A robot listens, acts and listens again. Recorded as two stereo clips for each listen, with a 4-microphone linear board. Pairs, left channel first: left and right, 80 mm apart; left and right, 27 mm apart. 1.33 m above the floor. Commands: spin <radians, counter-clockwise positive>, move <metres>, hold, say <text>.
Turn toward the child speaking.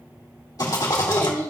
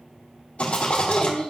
spin 0.61
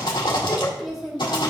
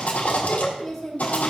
say Found it: a child speaking, straight ahead.